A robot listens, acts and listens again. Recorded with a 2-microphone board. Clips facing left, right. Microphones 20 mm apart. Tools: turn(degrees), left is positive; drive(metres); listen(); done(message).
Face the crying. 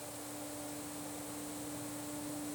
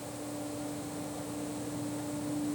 listen()
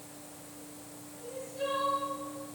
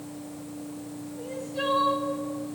turn(degrees=-90)
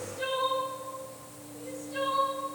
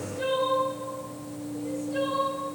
done("Found it: crying, straight ahead.")